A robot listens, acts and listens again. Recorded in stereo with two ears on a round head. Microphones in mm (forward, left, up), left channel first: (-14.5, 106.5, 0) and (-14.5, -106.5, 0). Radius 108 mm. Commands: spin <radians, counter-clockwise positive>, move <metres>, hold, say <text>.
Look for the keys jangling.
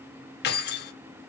spin 0.79
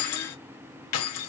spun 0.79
spin 1.57
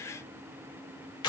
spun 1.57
spin 0.35
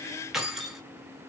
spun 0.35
say Facing the keys jangling.